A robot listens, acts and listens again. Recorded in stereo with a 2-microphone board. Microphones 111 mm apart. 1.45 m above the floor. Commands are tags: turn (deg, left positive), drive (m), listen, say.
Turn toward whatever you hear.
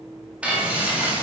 <turn deg="-30"/>
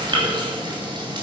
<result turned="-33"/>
<turn deg="-135"/>
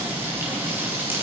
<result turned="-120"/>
<turn deg="-20"/>
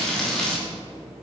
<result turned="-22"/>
<say>Facing the frying, 2 to 4 m away.</say>